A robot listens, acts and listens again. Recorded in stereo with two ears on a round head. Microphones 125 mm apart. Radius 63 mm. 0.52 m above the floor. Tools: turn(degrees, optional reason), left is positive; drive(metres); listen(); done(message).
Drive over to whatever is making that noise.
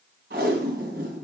turn(degrees=-70, reason="The tape being pulled: about 70° right or 110° right.")
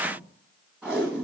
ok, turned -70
drive(metres=1.0)
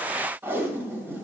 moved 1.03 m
turn(degrees=-15, reason="The tape being pulled is now 15° right.")
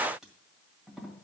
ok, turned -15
drive(metres=1.0)
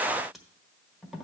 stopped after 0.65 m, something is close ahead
done("Arrived at the tape being pulled, straight ahead.")